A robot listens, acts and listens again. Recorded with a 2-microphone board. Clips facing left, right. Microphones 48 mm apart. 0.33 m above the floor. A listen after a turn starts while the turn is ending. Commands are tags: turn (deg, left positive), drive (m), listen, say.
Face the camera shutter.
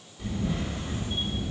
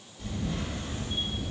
<turn deg="15"/>
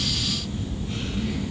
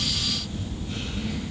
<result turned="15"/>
<say>Found it: a camera shutter, straight ahead, 1 to 2 m away.</say>